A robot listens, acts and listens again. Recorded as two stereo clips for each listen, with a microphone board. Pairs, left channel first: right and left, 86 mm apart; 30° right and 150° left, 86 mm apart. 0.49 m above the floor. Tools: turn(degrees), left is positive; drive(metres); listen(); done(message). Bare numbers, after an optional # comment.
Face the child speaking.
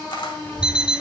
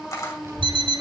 # The child speaking: 160° right.
turn(-160)
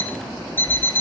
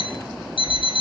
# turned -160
listen()
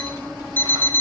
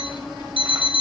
# The child speaking is now 35° right.
turn(-35)
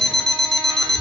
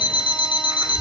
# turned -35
# The child speaking is now 25° right.
turn(-25)
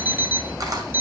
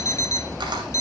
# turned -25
done("Found it: a child speaking, straight ahead, over 4 m away.")